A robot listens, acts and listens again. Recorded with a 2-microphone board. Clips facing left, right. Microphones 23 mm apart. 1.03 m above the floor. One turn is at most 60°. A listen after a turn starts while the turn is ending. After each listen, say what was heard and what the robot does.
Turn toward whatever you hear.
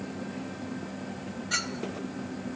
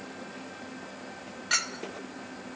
The clink: about 55° right or 125° right. Turn 55° right.
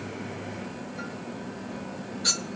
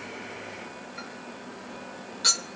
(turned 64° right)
So it is at 60° right. Turn 60° right.
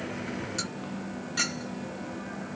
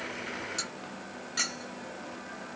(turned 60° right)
Facing the clink, 1 to 2 m away.